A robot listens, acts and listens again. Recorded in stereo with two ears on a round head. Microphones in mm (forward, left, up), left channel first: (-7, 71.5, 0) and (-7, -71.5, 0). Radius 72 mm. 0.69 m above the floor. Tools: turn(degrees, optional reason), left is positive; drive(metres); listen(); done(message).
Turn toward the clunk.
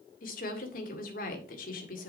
listen()
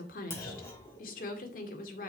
turn(degrees=15, reason="The clunk: about 15° left or 165° left.")
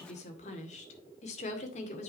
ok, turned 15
listen()
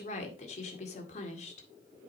done("I heard a clunk, but can't make it out now. It was about straight ahead or 150° left.")